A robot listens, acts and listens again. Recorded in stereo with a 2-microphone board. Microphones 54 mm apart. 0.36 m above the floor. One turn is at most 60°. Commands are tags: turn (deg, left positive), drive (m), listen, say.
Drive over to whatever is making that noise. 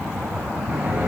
<turn deg="-30"/>
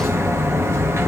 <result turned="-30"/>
<turn deg="-60"/>
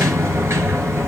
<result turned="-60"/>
<turn deg="-55"/>
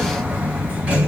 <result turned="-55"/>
<turn deg="-20"/>
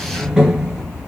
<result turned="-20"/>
<turn deg="-10"/>
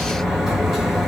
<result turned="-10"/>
<drive m="1.0"/>
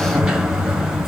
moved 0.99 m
<drive m="1.0"/>
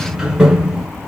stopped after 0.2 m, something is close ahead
<say>I am next to the sliding door.</say>